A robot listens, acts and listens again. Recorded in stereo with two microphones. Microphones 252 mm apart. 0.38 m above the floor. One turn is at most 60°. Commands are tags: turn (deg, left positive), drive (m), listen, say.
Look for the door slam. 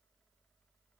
<listen/>
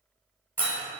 <turn deg="-30"/>
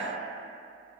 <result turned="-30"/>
<listen/>
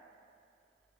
<say>I heard a door slam, but can't make it out now. It was about 25° left or 145° right.</say>